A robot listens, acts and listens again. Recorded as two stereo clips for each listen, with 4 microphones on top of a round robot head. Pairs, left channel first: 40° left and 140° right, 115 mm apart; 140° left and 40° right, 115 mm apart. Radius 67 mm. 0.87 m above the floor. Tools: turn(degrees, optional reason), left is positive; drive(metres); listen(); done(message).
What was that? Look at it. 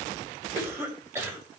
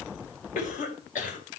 turn(degrees=150, reason="The cough: 150° left.")
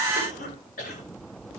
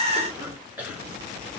turn(degrees=35, reason="The cough is now 35° left.")
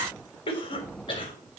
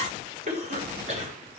turn(degrees=-10, reason="The cough is now 10° right.")
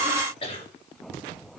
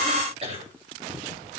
done("Facing the cough, over 4 m away.")